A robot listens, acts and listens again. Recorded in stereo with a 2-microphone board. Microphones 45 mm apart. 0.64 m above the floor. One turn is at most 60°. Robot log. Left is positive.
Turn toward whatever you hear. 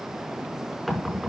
cmd yaw +30
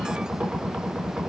note: So it is at 30° right.
cmd yaw -30
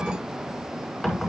end: Found it: knocking, straight ahead.